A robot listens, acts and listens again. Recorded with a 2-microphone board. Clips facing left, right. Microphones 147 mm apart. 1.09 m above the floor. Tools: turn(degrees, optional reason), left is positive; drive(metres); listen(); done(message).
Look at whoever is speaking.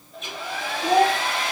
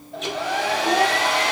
turn(degrees=90)
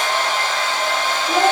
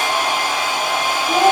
done("Found it: a child speaking, straight ahead, over 4 m away.")